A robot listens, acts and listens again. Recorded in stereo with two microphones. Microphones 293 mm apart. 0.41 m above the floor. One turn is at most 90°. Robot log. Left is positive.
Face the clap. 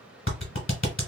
note: The clap: about 45° left or 135° left.
cmd yaw +45
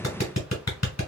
note: So it is at 85° left.
cmd yaw +85
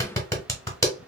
note: The clap is now 10° left.
cmd yaw +10
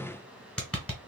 end: Facing the clap.